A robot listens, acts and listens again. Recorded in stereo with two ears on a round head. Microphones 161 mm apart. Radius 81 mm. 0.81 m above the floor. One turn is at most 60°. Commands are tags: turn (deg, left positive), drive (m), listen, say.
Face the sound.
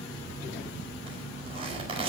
<turn deg="-30"/>
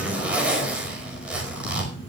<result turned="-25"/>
<say>Found it: a zipper, straight ahead.</say>